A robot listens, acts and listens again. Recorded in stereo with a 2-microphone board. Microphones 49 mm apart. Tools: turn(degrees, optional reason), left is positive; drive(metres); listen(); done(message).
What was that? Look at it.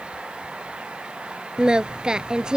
turn(degrees=-30)
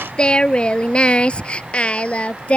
turn(degrees=25, reason="So it is at 25° left.")
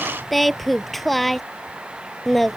done("Facing the singing.")